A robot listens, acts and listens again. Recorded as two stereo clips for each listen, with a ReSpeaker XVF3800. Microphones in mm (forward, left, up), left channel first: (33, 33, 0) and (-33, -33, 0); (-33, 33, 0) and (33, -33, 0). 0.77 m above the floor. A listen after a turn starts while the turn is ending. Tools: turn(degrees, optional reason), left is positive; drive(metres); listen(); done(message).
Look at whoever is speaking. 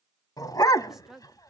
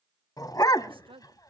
turn(degrees=-50, reason="The woman speaking: 50° right.")
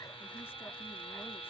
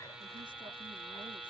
listen()
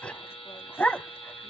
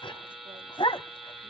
listen()
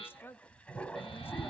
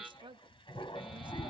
turn(degrees=-20, reason="The woman speaking is now 20° right.")
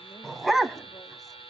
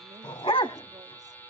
listen()
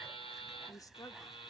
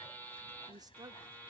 done("Found it: a woman speaking, straight ahead, 1 to 2 m away.")